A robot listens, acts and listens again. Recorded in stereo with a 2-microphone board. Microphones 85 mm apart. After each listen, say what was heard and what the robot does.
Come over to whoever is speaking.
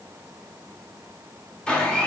Keep listening.
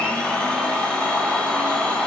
Keep listening.
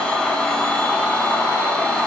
I can't make out anyone speaking to turn to.